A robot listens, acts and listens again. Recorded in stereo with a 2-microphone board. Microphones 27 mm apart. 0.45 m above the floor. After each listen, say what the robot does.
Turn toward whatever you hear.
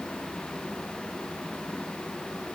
Keep listening.
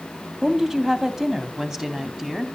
Turn 20° right.
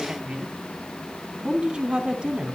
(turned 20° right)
Turn 140° right.
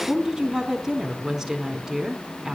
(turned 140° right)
Turn 10° right.
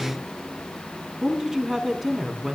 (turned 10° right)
Facing the woman speaking, over 4 m away.